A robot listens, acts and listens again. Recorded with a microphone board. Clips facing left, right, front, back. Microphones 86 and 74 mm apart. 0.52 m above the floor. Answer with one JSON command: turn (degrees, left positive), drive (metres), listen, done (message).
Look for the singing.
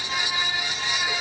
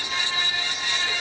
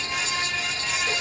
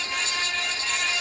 {"listen": true}
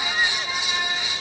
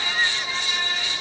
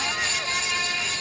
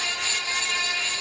{"listen": true}
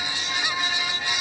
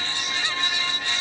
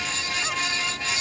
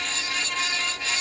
{"done": "I can't make out singing to turn to."}